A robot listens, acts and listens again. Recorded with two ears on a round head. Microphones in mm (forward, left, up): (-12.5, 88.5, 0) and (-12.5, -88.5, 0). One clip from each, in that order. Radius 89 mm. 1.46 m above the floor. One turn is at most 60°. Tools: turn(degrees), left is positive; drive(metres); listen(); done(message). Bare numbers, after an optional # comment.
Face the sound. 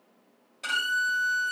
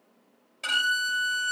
turn(30)
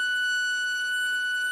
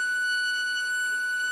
# So it is at 30° right.
turn(-30)
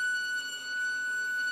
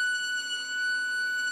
done("Found it: a violin, straight ahead.")